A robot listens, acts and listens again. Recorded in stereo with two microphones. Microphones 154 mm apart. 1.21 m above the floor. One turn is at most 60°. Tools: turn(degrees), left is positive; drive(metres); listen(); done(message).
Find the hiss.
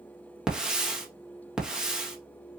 turn(degrees=-30)
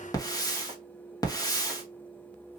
turn(degrees=25)
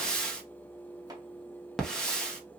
done("Facing the hiss.")